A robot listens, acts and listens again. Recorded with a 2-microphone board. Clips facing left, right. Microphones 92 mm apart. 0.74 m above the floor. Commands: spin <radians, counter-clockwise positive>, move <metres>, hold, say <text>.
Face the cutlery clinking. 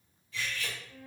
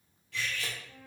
spin -1.22
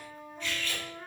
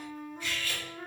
spin -0.17
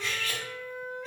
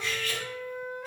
say Found it: cutlery clinking, straight ahead, 1 to 2 m away.